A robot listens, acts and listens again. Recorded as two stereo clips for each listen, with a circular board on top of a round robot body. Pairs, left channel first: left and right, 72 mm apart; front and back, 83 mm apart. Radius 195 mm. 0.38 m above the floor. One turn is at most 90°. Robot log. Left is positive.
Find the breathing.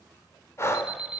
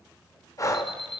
note: The breathing: 45° left.
cmd yaw +45
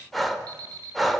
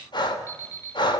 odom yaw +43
end: Facing the breathing, 2 to 4 m away.